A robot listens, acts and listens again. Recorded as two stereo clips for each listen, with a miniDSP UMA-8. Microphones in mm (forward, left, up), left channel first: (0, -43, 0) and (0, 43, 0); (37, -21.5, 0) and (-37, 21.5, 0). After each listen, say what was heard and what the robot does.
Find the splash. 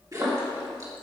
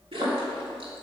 The splash: 140° left. Turn 140° left.
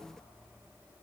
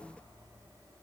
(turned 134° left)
Facing where the splash came from. I can't hear it now.